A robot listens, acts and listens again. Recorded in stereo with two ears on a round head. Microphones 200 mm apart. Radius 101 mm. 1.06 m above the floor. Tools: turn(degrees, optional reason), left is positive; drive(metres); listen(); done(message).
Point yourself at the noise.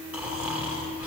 turn(degrees=-30)
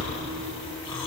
turn(degrees=20, reason="So it is at 20° left.")
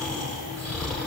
done("Found it: snoring, straight ahead.")